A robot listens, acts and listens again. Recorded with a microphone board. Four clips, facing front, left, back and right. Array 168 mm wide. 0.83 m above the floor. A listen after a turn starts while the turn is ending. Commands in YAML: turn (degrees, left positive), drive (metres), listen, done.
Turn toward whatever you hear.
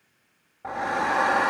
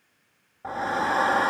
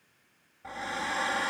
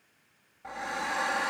turn: 40
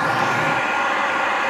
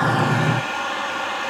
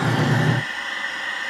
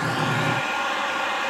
done: "Found it: a hair dryer, straight ahead."